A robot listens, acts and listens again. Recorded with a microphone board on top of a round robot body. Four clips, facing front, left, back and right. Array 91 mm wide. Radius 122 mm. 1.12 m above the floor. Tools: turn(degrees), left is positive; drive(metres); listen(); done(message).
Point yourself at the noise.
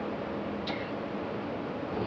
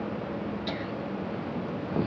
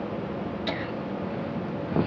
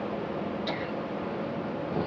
turn(degrees=170)
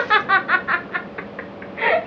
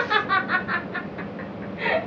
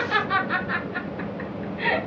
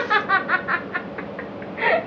turn(degrees=-40)
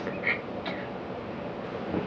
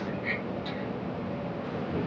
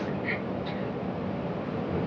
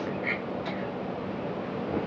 turn(degrees=-35)
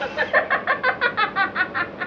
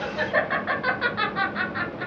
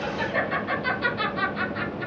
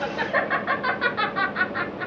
done("Found it: laughter, straight ahead, 2 to 4 m away.")